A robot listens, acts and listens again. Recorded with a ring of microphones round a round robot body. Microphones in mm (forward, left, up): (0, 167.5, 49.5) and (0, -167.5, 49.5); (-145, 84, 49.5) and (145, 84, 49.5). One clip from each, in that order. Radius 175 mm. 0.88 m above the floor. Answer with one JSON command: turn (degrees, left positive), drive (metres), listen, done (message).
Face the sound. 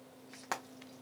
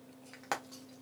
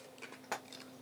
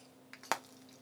{"done": "Facing the frying, under 1 m away."}